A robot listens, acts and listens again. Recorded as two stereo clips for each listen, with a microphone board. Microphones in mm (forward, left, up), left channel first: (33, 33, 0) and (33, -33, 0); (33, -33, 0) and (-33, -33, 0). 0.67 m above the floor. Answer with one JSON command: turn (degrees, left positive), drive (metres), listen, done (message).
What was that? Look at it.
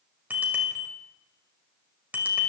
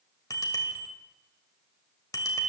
{"turn": -25}
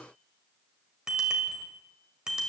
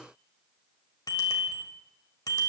{"turn": -10}
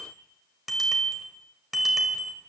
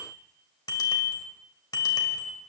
{"done": "Facing the bicycle bell."}